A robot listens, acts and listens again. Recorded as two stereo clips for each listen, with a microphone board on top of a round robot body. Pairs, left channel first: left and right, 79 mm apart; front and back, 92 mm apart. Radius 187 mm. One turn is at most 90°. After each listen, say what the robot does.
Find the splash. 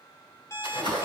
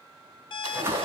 Turn 90° left.
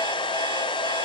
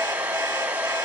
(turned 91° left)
Turn 25° left.
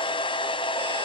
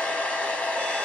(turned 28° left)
I heard a splash from this way, but can't make it out now.